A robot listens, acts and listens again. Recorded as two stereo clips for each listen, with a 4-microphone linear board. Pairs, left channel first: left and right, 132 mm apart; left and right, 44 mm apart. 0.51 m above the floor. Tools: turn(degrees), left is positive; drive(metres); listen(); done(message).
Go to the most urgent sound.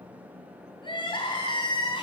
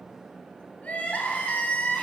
turn(degrees=40)
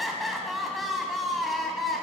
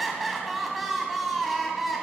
drive(metres=1.0)
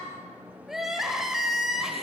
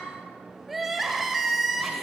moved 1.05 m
drive(metres=1.0)
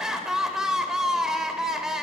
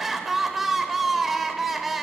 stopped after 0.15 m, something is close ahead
done("Arrived at the crying, straight ahead.")